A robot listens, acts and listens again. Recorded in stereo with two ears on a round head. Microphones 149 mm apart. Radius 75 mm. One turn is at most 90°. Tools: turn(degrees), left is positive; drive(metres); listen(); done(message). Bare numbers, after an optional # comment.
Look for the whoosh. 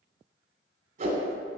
# The whoosh: about 50° right or 130° right.
turn(-50)
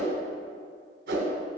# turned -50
# So it is at 80° right.
turn(-80)
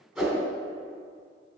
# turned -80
done("Facing the whoosh.")